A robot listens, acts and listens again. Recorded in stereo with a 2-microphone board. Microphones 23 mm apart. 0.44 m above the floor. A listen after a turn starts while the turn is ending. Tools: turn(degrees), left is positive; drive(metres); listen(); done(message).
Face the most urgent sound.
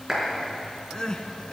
turn(degrees=35)
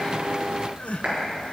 turn(degrees=105)
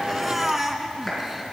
turn(degrees=-15)
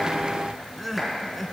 done("Found it: crying, straight ahead.")